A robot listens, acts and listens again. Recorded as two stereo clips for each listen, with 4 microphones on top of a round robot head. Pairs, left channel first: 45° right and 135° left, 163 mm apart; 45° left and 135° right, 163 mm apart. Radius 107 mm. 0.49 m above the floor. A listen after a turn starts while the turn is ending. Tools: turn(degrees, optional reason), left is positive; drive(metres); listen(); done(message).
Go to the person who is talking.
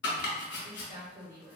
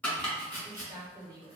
turn(degrees=160, reason="The woman speaking: 160° left.")
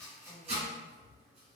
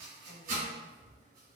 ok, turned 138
turn(degrees=20, reason="Nothing new. It was at 20° left.")
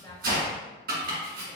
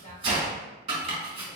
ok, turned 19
listen()
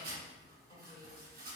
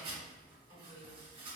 done("I heard a woman speaking from this way, but can't make it out now. I did not reach it.")